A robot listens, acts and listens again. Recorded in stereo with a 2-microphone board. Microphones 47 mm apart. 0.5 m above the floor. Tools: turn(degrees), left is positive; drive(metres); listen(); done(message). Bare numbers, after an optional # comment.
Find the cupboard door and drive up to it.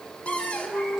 # The cupboard door: about 25° left or 155° left.
turn(25)
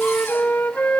listen()
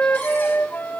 listen()
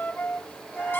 done("I heard a cupboard door, but can't make it out now. It was about straight ahead or 130° left. I did not reach it.")